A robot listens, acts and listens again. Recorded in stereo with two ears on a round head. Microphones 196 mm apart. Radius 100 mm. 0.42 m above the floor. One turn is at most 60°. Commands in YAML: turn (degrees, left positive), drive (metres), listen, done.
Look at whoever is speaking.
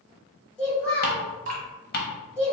turn: 30
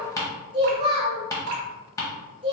turn: -25
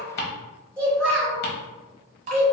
turn: 10
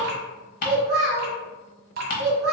done: "Found it: a child speaking, straight ahead, 1 to 2 m away."